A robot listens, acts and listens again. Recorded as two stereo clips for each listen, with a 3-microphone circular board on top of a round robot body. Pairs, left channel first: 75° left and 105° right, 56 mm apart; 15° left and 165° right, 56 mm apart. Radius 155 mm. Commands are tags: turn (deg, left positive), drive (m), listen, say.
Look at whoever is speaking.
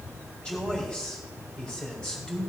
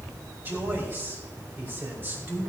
<turn deg="145"/>
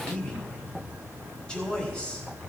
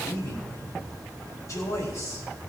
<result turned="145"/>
<say>Found it: a man speaking, straight ahead.</say>